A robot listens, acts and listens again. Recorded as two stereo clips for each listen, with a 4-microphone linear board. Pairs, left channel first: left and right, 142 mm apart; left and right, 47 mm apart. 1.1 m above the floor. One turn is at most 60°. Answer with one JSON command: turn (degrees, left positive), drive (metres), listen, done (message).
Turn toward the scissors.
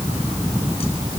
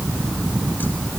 {"listen": true}
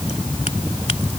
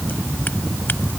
{"listen": true}
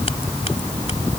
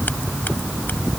{"done": "I can't make out scissors to turn to."}